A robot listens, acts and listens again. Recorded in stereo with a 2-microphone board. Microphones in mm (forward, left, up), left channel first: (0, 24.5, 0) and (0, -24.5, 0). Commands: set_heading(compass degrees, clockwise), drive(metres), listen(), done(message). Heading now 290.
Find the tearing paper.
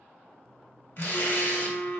set_heading(235)
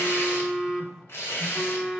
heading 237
set_heading(172)
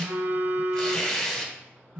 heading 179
set_heading(169)
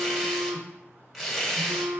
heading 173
done("Facing the tearing paper, 1 to 2 m away.")